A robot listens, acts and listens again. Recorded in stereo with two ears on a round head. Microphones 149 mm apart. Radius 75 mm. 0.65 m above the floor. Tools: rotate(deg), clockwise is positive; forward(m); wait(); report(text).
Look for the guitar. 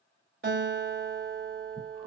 rotate(55)
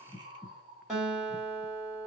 report("Facing the guitar, 1 to 2 m away.")